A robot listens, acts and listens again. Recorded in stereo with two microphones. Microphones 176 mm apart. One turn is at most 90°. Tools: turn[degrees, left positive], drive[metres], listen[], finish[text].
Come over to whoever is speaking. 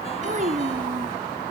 Thought: The child speaking: about 50° right or 130° right.
Action: turn[-50]
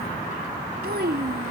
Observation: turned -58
Thought: So it is at 75° right.
Action: turn[-75]
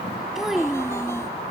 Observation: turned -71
Action: drive[1.0]
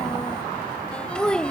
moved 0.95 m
Action: drive[1.0]
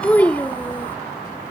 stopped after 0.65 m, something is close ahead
Thought: The child speaking is now 10° left.
Action: turn[10]
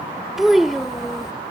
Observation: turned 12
Action: finish[I am next to the child speaking.]